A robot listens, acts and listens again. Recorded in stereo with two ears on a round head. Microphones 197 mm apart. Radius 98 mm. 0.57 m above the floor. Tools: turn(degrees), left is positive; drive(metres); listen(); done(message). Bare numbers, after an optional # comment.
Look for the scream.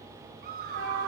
# The scream: about 45° right or 135° right.
turn(-45)
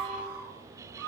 # So it is at 90° right.
turn(-90)
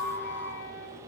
# The scream is now 10° left.
turn(10)
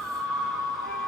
done("Found it: a scream, straight ahead, over 4 m away.")